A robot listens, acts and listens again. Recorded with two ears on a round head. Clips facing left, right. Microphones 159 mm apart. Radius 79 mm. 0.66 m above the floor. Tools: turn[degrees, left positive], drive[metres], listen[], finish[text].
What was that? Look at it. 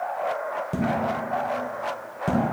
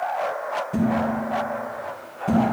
Thought: The dishes clattering: about 40° left or 140° left.
Action: turn[40]
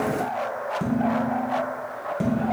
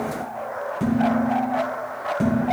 Action: finish[Facing the dishes clattering.]